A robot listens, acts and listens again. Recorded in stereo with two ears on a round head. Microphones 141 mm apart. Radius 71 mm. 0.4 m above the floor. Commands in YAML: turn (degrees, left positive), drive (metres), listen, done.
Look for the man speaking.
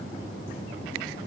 listen: true
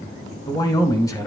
turn: 20
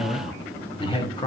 turn: 30
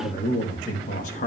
turn: 130
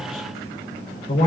turn: 40
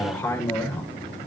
turn: 10
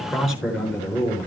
done: "Found it: a man speaking, straight ahead, over 4 m away."